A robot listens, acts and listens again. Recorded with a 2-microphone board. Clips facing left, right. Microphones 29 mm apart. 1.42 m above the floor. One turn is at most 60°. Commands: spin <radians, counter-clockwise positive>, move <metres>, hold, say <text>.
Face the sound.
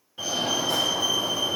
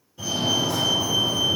spin 0.70
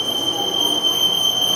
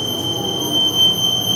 spin 1.05
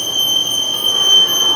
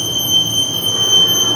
spin 0.70
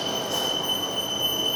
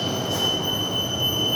say Found it: a fire alarm, straight ahead, over 4 m away.